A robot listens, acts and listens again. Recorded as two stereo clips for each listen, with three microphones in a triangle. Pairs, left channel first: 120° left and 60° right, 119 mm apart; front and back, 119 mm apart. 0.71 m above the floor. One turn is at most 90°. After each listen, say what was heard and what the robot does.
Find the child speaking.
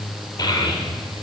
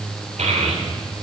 The child speaking: 170° left. Turn 90° left.
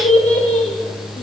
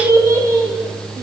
The child speaking is now 115° left. Turn 90° left.
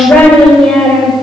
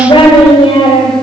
The child speaking is now 35° left. Turn 35° left.
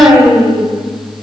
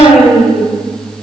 The child speaking is now 10° left. Turn 10° left.
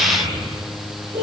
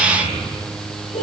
Facing the child speaking.